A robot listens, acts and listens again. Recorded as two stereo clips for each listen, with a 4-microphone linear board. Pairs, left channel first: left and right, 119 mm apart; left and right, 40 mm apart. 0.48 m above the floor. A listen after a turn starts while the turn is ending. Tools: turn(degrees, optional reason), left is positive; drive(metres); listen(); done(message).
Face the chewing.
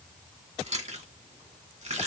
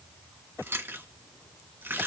turn(degrees=-90)
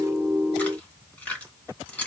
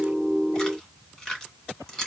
turn(degrees=15, reason="So it is at 15° left.")
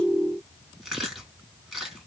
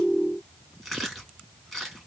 done("Facing the chewing.")